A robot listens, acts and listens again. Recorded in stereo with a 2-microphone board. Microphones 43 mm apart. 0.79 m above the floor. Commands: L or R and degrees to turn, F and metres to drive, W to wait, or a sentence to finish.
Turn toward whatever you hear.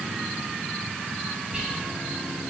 R20
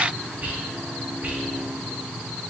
R135
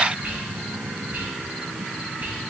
R50
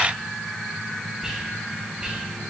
R15
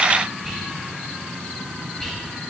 Found it: whispering, straight ahead, under 1 m away.